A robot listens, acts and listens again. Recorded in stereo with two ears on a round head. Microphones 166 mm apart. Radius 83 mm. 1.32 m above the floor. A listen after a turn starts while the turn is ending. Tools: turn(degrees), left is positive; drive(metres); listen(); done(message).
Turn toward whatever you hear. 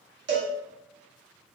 turn(degrees=-65)
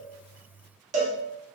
turn(degrees=-40)
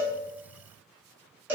turn(degrees=-15)
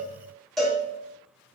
done("Found it: a cowbell, straight ahead.")